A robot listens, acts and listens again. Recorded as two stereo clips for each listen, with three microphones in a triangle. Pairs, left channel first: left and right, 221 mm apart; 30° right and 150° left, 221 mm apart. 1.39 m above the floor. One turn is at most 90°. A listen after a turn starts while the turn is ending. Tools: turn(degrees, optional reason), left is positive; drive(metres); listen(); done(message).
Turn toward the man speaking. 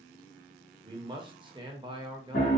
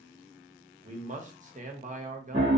turn(degrees=-90, reason="The man speaking: 155° right.")
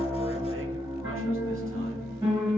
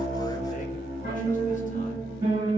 turn(degrees=-65, reason="Nothing new. It was at 65° right.")
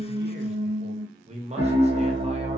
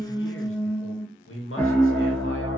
turn(degrees=-30, reason="The man speaking is now 30° right.")
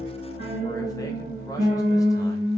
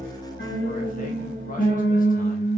listen()
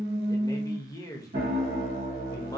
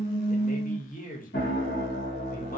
turn(degrees=15, reason="The man speaking is now 15° left.")
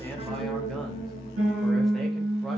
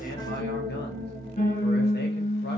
listen()
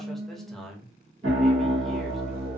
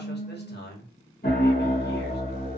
done("Facing the man speaking.")